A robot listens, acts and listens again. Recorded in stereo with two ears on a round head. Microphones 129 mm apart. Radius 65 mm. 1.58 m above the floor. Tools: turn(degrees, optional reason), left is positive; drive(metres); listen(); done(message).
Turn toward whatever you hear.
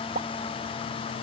turn(degrees=-55, reason="The pop: about 55° right or 125° right.")
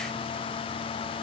listen()
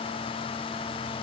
done("I heard a pop, but can't make it out now. It was about straight ahead or 70° right.")